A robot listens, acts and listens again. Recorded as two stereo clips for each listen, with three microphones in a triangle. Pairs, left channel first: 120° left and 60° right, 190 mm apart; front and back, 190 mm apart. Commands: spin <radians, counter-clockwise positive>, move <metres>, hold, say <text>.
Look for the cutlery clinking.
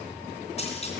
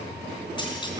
hold
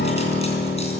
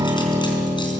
hold
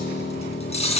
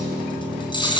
spin 1.13
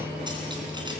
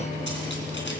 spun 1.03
hold
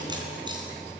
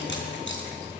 hold
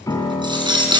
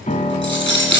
say Found it: cutlery clinking, straight ahead, 2 to 4 m away.